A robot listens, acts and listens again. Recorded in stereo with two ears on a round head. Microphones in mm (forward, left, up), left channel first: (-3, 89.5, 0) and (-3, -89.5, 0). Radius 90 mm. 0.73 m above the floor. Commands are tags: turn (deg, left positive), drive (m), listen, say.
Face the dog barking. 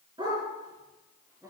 <turn deg="-20"/>
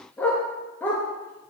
<turn deg="10"/>
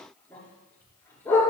<turn deg="10"/>
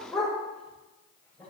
<say>Facing the dog barking, over 4 m away.</say>